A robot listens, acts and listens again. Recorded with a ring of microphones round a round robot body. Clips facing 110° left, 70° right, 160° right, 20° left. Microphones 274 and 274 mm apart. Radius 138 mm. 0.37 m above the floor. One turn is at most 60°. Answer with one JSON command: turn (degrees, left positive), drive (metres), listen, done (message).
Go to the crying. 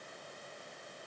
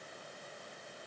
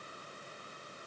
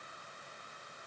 {"listen": true}
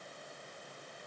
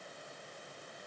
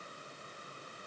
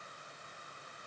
{"listen": true}
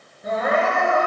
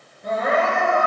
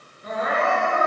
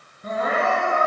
{"turn": 25}
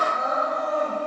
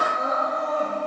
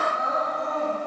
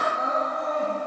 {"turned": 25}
{"drive": 1.0}
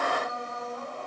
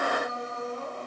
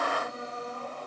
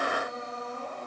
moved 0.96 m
{"drive": 1.0}
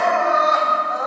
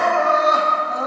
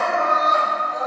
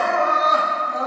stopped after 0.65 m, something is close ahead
{"turn": -15}
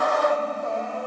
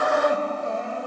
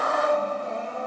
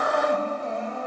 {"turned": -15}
{"done": "I am next to the crying."}